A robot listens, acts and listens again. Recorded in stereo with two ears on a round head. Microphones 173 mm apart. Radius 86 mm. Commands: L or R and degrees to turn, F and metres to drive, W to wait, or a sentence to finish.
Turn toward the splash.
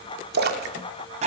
R55
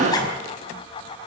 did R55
W
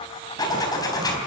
I heard a splash, but can't make it out now. It was about straight ahead or 70° right.